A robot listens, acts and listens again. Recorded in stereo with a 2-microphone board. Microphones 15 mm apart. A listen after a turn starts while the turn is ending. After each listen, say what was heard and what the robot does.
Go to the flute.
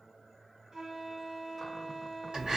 The flute: about 45° right or 135° right. Turn 45° right.
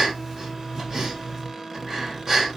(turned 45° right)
Keep listening.
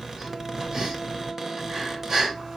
Keep listening.
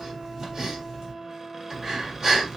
Drive 1.0 m forward.
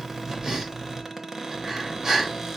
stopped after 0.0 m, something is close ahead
Keep listening.
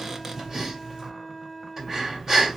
Something is in my way. I am facing the flute but have not reached it.